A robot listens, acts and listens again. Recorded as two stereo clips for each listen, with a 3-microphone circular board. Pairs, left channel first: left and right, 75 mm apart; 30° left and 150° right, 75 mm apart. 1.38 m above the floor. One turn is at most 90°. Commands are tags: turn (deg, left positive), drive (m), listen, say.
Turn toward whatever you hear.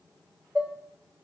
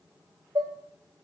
<turn deg="-90"/>
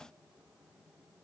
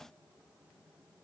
<turn deg="-80"/>
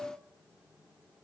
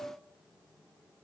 <listen/>
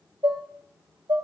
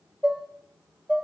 <turn deg="-55"/>
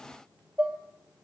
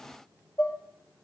<turn deg="-15"/>
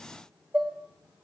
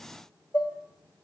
<say>Found it: dishes clattering, straight ahead, 1 to 2 m away.</say>